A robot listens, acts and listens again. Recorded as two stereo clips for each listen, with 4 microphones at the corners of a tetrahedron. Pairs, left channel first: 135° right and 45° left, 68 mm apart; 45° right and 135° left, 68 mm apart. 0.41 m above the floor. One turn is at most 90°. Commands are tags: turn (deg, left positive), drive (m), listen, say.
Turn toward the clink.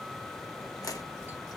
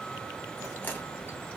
<listen/>
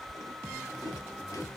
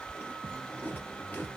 <listen/>
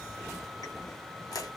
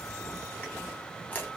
<say>I can't make out a clink, only chewing.</say>